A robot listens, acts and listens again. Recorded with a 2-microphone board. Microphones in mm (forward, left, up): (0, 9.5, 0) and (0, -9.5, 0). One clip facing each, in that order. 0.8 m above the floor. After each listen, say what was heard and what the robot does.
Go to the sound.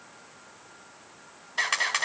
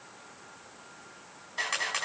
The camera shutter: about 35° left or 145° left. Turn 35° left.
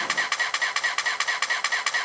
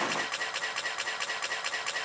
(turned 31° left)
So it is at 110° left. Turn 110° left.
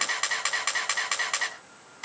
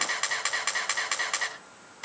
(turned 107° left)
Drive 1.0 m forward.
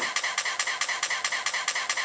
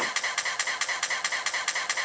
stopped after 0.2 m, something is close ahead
Something is in my way. I am facing the camera shutter but have not reached it.